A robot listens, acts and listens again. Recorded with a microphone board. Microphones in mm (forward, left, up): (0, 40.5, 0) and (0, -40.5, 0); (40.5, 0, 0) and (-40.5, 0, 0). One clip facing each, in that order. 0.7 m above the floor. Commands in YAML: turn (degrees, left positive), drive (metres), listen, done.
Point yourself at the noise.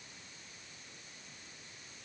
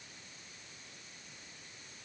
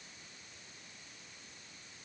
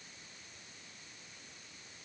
listen: true
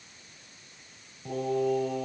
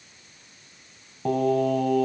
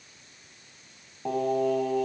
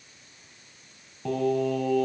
turn: -70
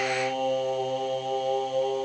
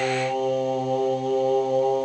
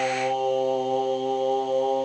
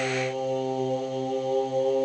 turn: -15
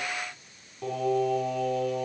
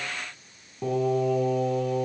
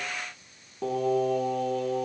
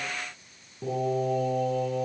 done: "Facing the singing, over 4 m away."